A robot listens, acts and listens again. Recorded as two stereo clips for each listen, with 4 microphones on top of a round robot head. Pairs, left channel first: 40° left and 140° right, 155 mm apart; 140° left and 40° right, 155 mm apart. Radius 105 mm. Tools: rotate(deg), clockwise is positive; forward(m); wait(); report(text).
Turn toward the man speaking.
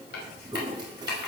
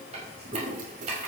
wait()
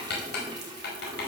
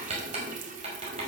wait()
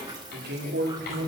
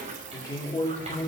rotate(155)
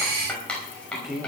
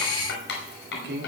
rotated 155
rotate(55)
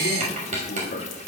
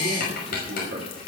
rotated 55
wait()
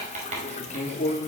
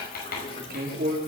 rotate(10)
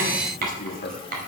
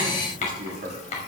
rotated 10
report("Facing the man speaking, 2 to 4 m away.")